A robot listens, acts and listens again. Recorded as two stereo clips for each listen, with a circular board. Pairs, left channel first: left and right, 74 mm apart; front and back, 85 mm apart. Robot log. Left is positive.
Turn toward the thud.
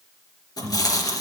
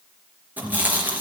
cmd idle
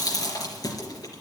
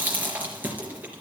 cmd idle
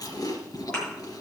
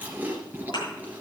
note: The thud: 15° left.
cmd yaw +15
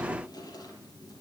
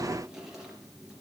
end: Facing where the thud came from. I can't hear it now.